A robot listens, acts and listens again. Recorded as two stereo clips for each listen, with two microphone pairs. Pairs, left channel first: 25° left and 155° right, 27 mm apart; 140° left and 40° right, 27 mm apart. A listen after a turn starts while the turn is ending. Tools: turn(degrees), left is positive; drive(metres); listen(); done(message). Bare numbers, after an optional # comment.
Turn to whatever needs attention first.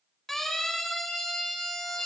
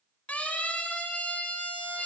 # The siren: 110° left.
turn(110)
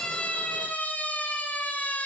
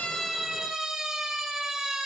# The siren is now 35° left.
turn(35)
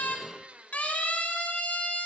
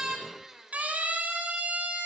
done("Found it: a siren, straight ahead, over 4 m away.")